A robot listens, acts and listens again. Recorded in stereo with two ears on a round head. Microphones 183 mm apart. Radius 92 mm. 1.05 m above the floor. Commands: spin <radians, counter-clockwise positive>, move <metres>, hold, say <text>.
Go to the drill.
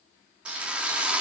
spin -0.52
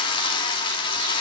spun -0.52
spin 0.44
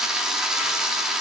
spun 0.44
move 1.0
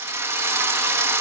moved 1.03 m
spin -0.26
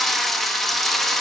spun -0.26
move 1.0
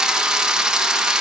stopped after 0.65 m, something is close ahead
say Arrived at the drill, straight ahead.